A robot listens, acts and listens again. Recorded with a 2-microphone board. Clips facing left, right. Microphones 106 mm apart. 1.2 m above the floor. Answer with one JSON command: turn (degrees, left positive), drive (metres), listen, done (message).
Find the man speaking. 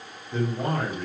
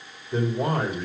{"turn": -20}
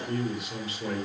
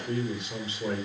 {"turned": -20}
{"done": "Found it: a man speaking, straight ahead, over 4 m away."}